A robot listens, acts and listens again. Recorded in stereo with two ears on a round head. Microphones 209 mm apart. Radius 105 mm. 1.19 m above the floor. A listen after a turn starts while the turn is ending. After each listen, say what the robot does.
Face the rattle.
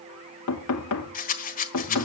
Turn 35° left.
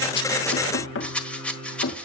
Found it: a rattle, straight ahead.